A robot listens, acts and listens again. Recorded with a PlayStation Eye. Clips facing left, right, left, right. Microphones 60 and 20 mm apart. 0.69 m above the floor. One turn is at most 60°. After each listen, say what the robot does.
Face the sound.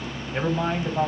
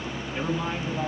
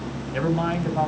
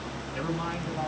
Turn 60° left.
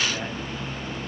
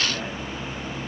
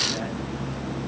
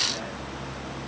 Keep listening.
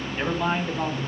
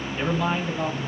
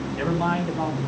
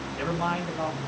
Turn 15° left.
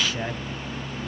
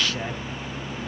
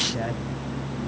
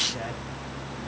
Found it: a man speaking, straight ahead.